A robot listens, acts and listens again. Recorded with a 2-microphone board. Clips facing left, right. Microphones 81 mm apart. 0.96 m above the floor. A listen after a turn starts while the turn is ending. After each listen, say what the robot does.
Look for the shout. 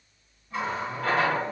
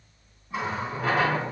Keep listening.
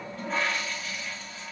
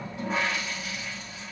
Keep listening.
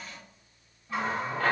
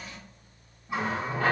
I can't make out a shout to turn to.